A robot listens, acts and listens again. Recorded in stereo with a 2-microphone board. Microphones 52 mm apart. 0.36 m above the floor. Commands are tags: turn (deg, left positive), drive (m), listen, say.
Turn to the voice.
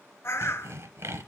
<listen/>
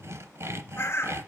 <listen/>
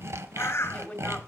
<turn deg="20"/>
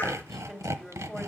<say>Found it: a woman speaking, straight ahead.</say>